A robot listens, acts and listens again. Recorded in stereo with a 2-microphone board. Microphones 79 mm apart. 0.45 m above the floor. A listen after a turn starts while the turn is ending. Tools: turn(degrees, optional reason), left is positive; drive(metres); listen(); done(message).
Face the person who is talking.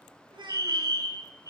turn(degrees=-90)
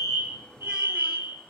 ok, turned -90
listen()
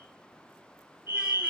listen()
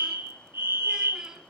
done("I heard a child speaking from this way, but can't make it out now.")